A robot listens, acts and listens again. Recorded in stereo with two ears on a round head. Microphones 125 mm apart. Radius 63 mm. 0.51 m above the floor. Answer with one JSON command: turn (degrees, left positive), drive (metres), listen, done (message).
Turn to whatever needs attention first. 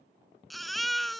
{"turn": 30}
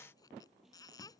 {"turn": 150}
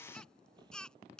{"done": "Found it: a baby crying, straight ahead."}